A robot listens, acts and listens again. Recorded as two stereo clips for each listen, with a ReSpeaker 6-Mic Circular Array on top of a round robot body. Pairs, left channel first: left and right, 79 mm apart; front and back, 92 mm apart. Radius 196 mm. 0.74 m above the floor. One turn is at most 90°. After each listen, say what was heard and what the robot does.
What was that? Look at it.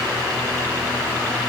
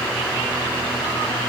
Keep listening.
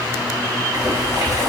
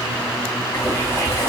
The boiling: 50° right. Turn 50° right.
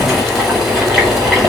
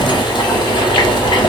Found it: boiling, straight ahead.